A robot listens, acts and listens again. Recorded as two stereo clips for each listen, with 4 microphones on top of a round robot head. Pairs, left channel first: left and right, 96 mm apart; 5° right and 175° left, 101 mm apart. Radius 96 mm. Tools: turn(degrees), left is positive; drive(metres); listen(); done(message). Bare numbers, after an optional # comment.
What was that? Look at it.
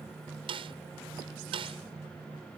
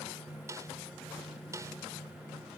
# The snare drum: 120° right.
turn(-120)
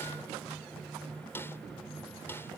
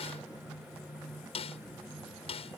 # The snare drum is now 20° left.
turn(20)
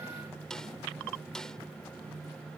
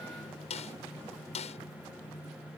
done("Found it: a snare drum, straight ahead.")